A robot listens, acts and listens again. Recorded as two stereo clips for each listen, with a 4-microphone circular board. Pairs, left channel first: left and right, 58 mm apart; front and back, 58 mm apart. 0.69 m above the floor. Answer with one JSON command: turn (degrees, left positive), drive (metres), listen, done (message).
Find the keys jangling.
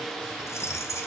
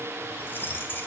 {"turn": 55}
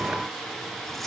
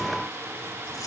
{"listen": true}
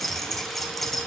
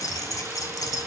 {"done": "Found it: keys jangling, straight ahead."}